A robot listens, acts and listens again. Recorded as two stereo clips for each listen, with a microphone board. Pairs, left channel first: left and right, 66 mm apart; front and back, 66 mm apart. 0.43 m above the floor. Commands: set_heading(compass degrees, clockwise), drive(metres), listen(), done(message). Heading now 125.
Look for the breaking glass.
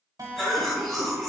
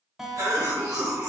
listen()
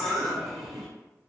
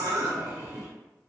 listen()
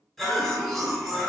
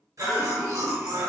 done("I can't make out breaking glass to turn to.")